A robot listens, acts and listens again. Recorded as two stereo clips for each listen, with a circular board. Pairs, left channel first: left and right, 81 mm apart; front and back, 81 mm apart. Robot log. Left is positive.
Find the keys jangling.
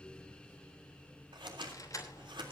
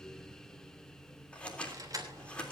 note: The keys jangling: 135° left.
cmd yaw +135
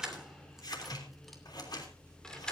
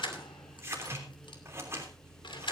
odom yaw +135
note: The keys jangling is now 10° left.
cmd yaw +10
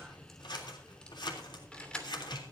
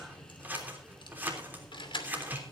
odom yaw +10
note: The keys jangling is now 10° left.
cmd yaw +10
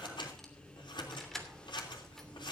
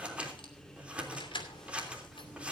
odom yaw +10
end: Facing the keys jangling, 2 to 4 m away.